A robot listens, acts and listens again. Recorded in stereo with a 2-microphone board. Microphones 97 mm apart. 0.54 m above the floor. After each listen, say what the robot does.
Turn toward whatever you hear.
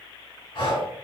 Turn 55° left.
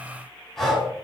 Facing the breathing.